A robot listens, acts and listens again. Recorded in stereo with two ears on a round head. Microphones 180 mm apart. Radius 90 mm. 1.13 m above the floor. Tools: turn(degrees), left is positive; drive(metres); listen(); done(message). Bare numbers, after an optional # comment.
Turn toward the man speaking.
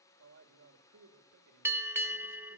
# The man speaking: about 75° right or 105° right.
turn(-75)
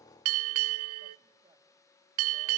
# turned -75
listen()
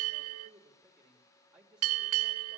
done("Found it: a man speaking, straight ahead, 2 to 4 m away.")